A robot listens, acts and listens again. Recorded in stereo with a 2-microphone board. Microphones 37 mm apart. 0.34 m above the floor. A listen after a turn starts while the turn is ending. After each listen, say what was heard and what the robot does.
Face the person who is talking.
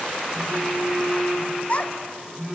The child speaking: about 40° left or 140° left. Turn 40° left.
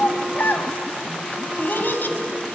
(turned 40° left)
So it is at 95° left. Turn 95° left.
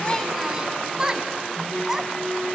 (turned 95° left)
The child speaking is now 20° right. Turn 20° right.
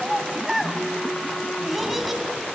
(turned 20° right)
Found it: a child speaking, straight ahead.